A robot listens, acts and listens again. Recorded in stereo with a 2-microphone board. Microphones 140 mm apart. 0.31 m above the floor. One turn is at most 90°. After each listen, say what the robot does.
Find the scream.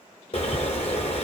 Keep listening.
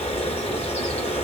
Keep listening.
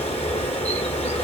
I can't make out a scream to turn to.